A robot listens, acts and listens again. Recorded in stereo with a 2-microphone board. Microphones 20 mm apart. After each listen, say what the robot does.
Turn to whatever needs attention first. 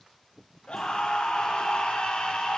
Turn 55° left.
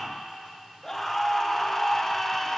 Turn 15° left.
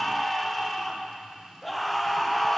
Found it: a scream, straight ahead, under 1 m away.